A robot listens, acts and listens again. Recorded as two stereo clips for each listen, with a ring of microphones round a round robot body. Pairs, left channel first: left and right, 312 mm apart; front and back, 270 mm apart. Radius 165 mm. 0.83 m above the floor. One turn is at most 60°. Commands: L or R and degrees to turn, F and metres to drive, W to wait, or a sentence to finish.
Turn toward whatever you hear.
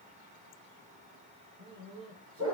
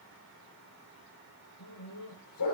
R35
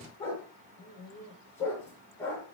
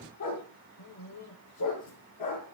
Found it: a dog barking, straight ahead.